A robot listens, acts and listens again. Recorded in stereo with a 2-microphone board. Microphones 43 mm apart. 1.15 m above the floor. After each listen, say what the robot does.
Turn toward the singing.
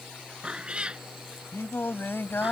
Turn 60° left.
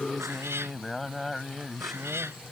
Found it: singing, straight ahead.